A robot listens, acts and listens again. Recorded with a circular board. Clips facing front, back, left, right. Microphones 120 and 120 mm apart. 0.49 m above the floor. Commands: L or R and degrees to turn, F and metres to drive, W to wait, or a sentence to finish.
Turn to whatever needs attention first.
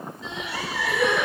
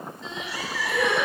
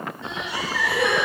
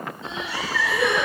L85
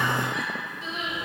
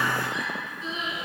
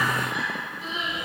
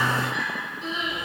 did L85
Found it: crying, straight ahead, 2 to 4 m away.